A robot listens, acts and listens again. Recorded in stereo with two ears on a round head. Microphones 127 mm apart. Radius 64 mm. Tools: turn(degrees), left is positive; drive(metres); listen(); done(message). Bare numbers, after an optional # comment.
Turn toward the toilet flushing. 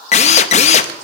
listen()
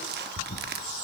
# The toilet flushing: about 40° left or 140° left.
turn(40)
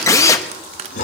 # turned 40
# So it is at 95° left.
turn(95)
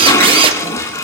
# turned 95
# The toilet flushing is now 25° left.
turn(25)
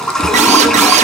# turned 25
done("Found it: a toilet flushing, straight ahead, 1 to 2 m away.")